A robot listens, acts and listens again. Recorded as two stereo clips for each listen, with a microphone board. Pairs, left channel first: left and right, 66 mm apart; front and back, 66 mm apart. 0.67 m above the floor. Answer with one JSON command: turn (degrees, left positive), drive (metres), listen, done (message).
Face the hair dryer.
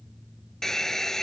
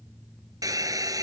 {"turn": 175}
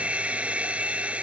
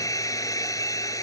{"turn": -20}
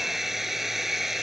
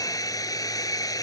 {"done": "Facing the hair dryer."}